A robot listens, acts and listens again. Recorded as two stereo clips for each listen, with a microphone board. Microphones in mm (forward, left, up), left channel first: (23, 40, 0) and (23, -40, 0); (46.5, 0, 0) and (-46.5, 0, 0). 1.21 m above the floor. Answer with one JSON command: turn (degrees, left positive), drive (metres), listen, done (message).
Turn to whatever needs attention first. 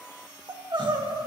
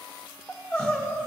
{"turn": -75}
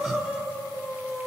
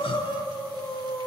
{"done": "Facing the crying, 1 to 2 m away."}